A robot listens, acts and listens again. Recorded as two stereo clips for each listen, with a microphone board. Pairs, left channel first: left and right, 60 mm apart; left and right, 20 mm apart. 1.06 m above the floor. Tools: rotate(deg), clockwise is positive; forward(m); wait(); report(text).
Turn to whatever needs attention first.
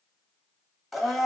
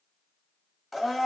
wait()
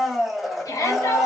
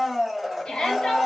rotate(-65)
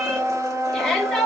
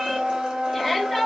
rotate(-10)
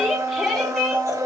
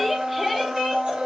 report("Found it: a shout, straight ahead.")